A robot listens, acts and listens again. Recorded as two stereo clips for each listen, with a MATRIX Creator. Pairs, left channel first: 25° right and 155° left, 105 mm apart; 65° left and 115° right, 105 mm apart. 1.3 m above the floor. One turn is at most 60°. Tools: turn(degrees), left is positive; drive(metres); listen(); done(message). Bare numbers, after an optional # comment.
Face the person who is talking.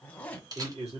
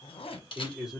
# The man speaking: 160° left.
turn(60)
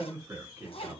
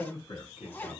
# The man speaking is now 90° left.
turn(60)
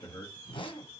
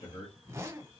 # The man speaking is now 30° left.
turn(30)
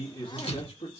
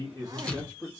done("Facing the man speaking, 1 to 2 m away.")